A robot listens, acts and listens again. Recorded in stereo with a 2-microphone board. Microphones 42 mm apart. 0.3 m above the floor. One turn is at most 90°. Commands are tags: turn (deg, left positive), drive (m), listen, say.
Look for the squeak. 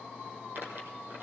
<turn deg="-50"/>
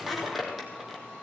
<say>Found it: a squeak, straight ahead, 2 to 4 m away.</say>